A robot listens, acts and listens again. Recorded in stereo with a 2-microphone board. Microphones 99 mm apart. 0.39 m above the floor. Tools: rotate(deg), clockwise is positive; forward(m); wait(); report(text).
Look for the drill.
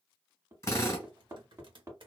rotate(-30)
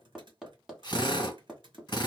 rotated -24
rotate(-120)
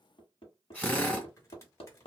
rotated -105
rotate(-15)
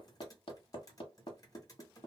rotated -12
wait()
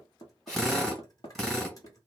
report("Facing the drill, 1 to 2 m away.")